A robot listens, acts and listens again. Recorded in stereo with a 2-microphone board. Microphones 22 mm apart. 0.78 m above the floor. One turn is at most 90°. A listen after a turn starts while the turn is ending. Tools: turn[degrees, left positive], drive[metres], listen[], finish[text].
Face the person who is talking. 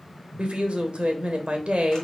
Thought: The woman speaking: about 60° right or 120° right.
Action: turn[-60]
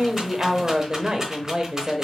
Thought: So it is at 45° right.
Action: turn[-45]
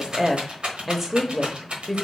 Thought: The woman speaking is now 15° right.
Action: turn[-15]
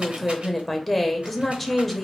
Action: finish[Found it: a woman speaking, straight ahead.]